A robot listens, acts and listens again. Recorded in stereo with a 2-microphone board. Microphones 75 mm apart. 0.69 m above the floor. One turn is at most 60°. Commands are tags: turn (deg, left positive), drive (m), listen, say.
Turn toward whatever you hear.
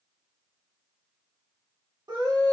<turn deg="-60"/>
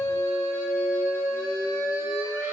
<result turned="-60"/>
<turn deg="-35"/>
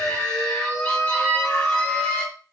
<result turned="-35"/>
<turn deg="15"/>
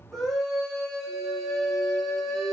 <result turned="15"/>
<say>Facing the scream, 1 to 2 m away.</say>